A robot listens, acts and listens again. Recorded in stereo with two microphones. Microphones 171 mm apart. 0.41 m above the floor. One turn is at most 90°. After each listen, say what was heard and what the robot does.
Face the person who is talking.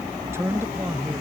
Turn 30° right.
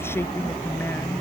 So it is at 15° left. Turn 15° left.
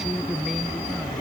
Found it: a man speaking, straight ahead.